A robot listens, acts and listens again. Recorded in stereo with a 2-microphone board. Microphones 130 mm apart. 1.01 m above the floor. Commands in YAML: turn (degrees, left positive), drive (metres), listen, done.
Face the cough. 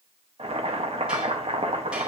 listen: true
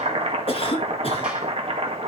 turn: 45
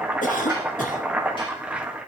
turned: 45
turn: 85
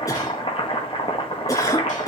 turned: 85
turn: 25
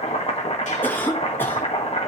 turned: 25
turn: 15
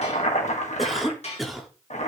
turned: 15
done: "Facing the cough, 2 to 4 m away."